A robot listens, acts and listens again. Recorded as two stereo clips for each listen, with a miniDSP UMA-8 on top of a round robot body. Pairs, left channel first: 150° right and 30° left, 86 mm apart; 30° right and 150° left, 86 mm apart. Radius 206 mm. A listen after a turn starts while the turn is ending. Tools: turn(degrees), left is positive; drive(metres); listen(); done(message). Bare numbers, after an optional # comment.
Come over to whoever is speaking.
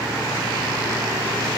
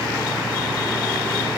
listen()
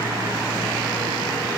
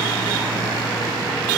listen()
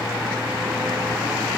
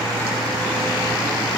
done("I can't make out anyone speaking.")